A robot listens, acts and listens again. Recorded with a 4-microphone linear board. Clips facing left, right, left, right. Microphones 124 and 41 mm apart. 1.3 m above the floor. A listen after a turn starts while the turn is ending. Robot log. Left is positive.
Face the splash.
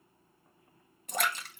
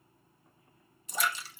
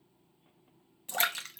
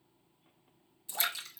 note: The splash: about 60° left or 120° left.
cmd yaw +60
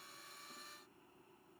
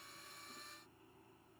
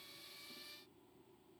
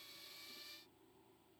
cmd idle
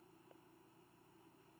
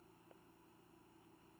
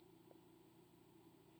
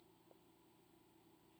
end: I heard a splash, but can't make it out now. It was about straight ahead or 60° left.